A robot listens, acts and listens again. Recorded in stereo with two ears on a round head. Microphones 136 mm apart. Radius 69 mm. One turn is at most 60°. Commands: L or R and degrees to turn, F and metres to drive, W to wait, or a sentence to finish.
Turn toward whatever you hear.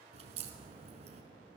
R45
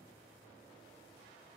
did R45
W
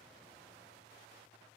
I heard a crack, but can't make it out now. It was about straight ahead or 90° right.